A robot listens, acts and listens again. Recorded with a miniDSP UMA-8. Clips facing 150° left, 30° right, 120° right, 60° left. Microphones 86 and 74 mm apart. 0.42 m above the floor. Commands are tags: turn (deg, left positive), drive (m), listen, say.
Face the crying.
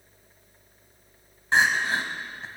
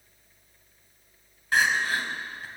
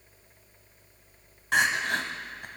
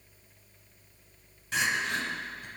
<turn deg="-145"/>
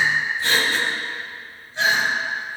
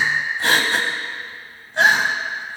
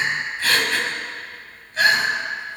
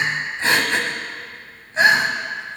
<say>Facing the crying.</say>